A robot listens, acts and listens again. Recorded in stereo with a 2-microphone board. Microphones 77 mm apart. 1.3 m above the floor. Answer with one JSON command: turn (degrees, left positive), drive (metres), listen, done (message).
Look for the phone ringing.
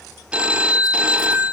{"turn": -30}
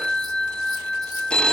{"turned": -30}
{"turn": 15}
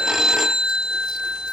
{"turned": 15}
{"done": "Found it: a phone ringing, straight ahead, 1 to 2 m away."}